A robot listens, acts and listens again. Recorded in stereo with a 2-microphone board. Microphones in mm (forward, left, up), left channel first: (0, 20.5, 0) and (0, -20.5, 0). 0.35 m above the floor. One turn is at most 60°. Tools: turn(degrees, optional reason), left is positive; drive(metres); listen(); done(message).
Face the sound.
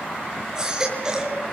turn(degrees=-20, reason="The baby crying: about 20° right or 160° right.")
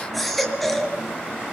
done("Found it: a baby crying, straight ahead.")